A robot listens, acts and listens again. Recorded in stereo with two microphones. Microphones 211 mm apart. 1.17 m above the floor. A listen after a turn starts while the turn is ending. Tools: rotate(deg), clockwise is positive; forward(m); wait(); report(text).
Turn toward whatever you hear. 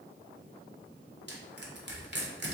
rotate(55)
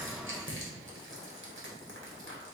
rotate(65)
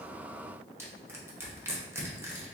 rotate(10)
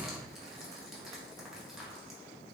report("Found it: crushing, straight ahead, under 1 m away.")